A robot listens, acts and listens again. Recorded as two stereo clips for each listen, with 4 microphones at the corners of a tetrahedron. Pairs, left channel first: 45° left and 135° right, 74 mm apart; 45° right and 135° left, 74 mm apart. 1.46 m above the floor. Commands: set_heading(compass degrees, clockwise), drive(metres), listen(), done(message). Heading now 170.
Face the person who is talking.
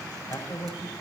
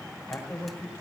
set_heading(155)
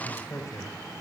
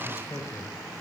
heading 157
done("Found it: a man speaking, straight ahead, over 4 m away.")